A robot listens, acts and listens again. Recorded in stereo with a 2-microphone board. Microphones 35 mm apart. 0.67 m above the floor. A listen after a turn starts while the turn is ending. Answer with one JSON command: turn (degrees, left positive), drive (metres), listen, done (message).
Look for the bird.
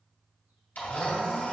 {"listen": true}
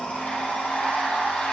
{"listen": true}
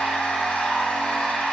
{"done": "I can't make out a bird, only a blender."}